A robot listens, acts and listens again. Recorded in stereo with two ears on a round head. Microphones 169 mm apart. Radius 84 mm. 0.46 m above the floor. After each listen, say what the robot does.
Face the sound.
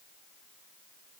Keep listening.
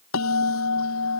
Turn 90° left.
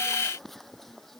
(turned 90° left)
Facing the bell.